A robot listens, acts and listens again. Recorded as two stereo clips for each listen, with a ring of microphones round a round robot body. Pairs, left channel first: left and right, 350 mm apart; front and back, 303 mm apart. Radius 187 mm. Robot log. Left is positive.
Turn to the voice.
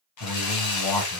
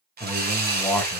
note: The man speaking: 85° left.
cmd yaw +85
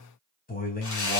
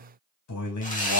note: The man speaking is now 25° left.
cmd yaw +25
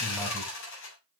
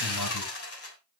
cmd idle
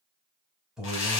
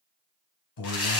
end: Facing the man speaking.